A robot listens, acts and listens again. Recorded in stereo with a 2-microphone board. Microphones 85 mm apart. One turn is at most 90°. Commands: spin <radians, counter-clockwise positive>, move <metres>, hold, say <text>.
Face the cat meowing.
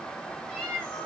spin 0.52
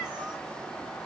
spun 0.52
hold
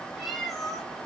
spin 0.52
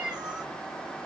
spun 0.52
spin -0.17
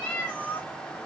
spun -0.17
spin 0.35
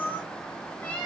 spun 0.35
spin 0.26
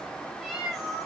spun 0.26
say Found it: a cat meowing, straight ahead.